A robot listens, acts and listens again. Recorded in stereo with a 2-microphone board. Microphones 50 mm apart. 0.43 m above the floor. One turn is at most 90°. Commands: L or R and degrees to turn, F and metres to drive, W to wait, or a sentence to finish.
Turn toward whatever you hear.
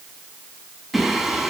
L30
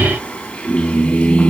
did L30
L90
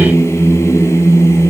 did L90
L80
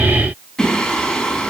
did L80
L10
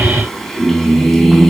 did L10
Facing the singing, over 4 m away.